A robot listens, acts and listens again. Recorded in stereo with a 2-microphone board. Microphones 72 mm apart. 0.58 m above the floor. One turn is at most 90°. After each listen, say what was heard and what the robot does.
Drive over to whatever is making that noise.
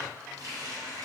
The running tap: about 50° right or 130° right. Turn 50° right.
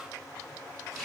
Drive 1.0 m forward.
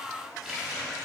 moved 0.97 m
Drive 1.0 m forward.
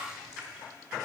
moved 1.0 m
The running tap is now 10° right. Turn 10° right.
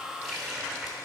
Drive 1.0 m forward.
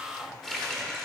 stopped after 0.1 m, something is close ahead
Arrived at the running tap, straight ahead.